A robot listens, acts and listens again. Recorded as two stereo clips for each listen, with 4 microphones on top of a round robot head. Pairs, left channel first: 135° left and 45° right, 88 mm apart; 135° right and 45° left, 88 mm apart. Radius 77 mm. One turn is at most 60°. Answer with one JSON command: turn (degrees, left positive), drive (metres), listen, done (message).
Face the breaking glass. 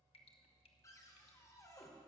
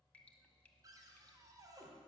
{"listen": true}
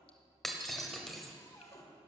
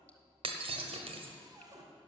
{"turn": 50}
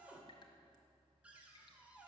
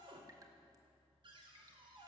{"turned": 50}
{"done": "Facing where the breaking glass came from. I can't hear it now."}